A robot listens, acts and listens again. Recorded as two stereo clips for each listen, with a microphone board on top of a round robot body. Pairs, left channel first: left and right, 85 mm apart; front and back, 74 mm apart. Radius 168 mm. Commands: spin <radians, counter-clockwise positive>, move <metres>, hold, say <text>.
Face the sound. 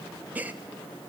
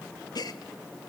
spin -0.35
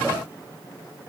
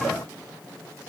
say Facing where the gasp came from. I can't hear it now.